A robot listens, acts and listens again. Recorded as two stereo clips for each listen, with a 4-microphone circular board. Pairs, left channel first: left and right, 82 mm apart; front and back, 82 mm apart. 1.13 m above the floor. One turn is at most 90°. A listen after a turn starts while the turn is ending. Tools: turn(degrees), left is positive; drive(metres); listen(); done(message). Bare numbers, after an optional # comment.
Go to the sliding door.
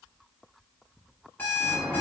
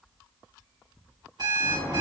# The sliding door: 145° right.
turn(-90)
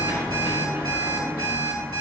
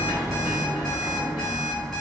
# The sliding door is now 30° right.
turn(-30)
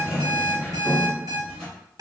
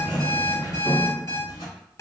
drive(1.0)
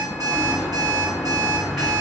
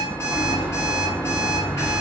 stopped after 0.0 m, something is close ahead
done("Blocked. The sliding door is further on, straight ahead.")